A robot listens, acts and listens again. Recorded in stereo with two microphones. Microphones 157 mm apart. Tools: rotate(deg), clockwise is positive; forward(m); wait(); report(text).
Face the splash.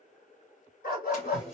rotate(-45)
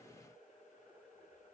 wait()
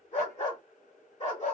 report("I heard a splash, but can't make it out now. It was about straight ahead or 90° left.")